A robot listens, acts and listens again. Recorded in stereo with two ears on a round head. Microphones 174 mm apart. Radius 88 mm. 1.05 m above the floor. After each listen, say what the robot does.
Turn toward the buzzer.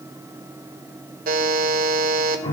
Turn 50° right.
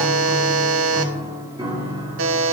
Turn 80° right.
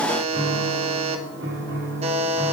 Turn 30° right.
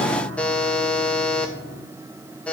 Facing the buzzer.